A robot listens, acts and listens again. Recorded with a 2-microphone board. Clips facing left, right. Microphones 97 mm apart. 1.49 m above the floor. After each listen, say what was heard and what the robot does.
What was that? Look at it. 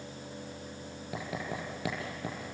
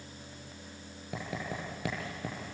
Turn 30° left.
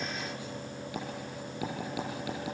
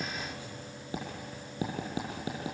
So it is at 35° right. Turn 35° right.
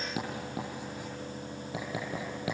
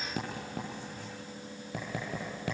Facing the writing, over 4 m away.